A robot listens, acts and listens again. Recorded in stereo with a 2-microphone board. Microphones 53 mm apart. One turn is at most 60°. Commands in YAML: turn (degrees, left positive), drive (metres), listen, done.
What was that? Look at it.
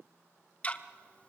turn: 25
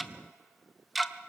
done: "Found it: ticking, straight ahead."